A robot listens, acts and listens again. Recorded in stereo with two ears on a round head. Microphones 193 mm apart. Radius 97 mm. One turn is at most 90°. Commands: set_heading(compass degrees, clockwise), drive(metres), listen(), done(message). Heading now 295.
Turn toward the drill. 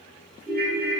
listen()
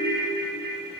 listen()
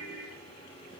done("I can't make out a drill, only a ringtone.")